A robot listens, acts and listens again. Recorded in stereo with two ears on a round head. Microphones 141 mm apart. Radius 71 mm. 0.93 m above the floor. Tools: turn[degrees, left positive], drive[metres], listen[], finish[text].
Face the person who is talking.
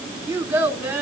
Thought: The child speaking: about 15° right or 165° right.
Action: turn[-15]
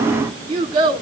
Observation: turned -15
Thought: So it is at 145° right.
Action: turn[-145]
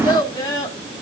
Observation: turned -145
Thought: The child speaking is now 25° left.
Action: turn[25]
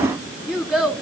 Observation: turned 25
Action: finish[Facing the child speaking.]